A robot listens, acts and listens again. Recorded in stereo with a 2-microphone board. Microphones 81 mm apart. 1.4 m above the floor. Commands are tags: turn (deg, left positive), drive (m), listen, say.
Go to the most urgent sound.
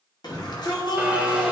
<turn deg="60"/>
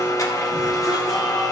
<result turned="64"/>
<listen/>
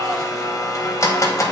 <listen/>
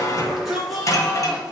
<drive m="1.0"/>
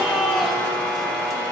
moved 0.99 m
<drive m="1.0"/>
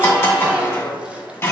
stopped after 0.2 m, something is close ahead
<listen/>
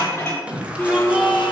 <turn deg="-15"/>
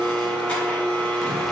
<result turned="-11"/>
<listen/>
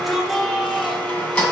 <say>Arrived at the shout, straight ahead.</say>